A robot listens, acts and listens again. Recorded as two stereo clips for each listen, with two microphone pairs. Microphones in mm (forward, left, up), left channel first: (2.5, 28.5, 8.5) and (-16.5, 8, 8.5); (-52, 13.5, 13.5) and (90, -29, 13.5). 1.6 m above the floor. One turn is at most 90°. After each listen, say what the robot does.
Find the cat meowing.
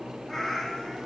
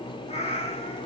Turn 90° left.
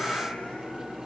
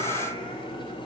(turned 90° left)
Turn 30° left.
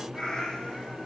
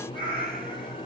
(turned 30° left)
Turn 15° right.
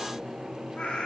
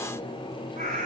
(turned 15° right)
Facing the cat meowing.